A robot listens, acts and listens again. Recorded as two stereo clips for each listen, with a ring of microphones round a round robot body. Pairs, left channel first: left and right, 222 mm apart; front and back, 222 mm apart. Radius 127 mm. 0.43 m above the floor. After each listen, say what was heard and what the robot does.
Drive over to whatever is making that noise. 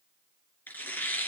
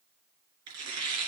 The tearing paper: 170° left. Turn 170° left.
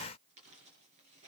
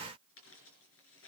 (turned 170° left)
Keep listening.
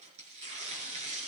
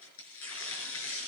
The tearing paper is now 25° right. Turn 25° right.
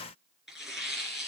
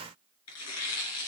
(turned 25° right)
Drive 1.0 m forward.
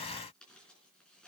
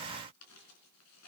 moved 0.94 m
Keep listening.
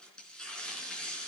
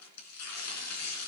Drive 1.0 m forward.
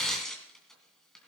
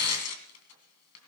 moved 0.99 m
Drive 1.0 m forward.
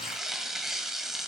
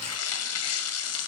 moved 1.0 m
Drive 1.0 m forward.
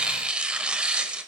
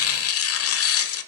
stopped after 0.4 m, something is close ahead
I am next to the tearing paper.